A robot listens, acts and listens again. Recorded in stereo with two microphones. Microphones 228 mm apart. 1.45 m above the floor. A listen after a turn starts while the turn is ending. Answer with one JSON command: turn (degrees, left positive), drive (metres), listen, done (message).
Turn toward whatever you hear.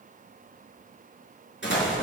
{"turn": 55}
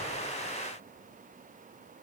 {"listen": true}
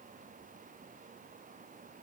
{"done": "I heard an explosion, but can't make it out now. It was about straight ahead or 70° left."}